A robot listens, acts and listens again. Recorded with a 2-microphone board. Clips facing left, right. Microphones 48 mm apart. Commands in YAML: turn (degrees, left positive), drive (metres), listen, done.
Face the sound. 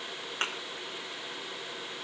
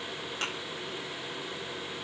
turn: 45
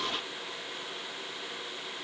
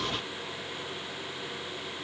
listen: true
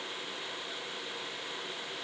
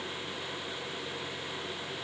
done: "I heard a thud, but can't make it out now. It was about straight ahead or 90° left."